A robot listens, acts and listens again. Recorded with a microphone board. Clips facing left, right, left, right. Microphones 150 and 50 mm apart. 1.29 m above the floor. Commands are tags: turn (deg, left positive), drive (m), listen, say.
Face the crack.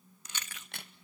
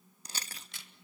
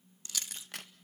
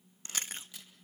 <turn deg="60"/>
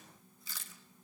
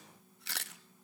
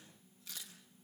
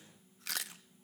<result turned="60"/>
<listen/>
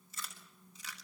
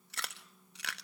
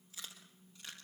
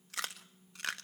<say>I heard a crack, but can't make it out now. It was about straight ahead or 60° left.</say>